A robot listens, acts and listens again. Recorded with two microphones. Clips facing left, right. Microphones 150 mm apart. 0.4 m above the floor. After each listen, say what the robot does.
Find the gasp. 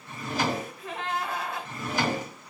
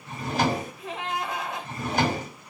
Turn 20° right.
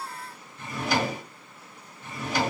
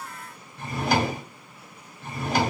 Keep listening.
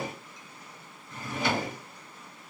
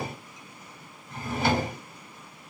I heard a gasp, but can't make it out now. It was about straight ahead or 140° right.